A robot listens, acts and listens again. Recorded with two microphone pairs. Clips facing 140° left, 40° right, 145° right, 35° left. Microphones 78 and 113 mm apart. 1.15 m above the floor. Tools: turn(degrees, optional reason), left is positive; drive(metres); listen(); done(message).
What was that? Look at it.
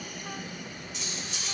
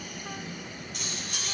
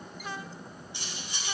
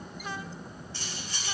turn(degrees=-70, reason="The cutlery clinking: 70° right.")
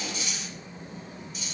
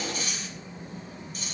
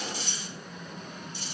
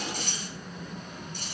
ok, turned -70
done("Facing the cutlery clinking, 2 to 4 m away.")